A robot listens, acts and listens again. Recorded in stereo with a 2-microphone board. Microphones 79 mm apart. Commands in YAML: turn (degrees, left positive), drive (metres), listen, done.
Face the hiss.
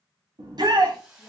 turn: -30
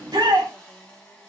turn: 10
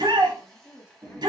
done: "Facing the hiss."